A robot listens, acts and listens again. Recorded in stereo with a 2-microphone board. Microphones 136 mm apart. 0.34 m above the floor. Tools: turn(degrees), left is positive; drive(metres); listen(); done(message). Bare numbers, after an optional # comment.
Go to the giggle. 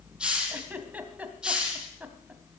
turn(-30)
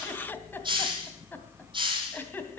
# So it is at 20° left.
turn(20)
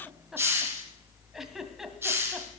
drive(1.0)
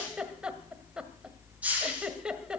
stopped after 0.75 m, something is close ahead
# The giggle is now 10° right.
turn(-10)
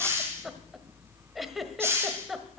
done("I am next to the giggle.")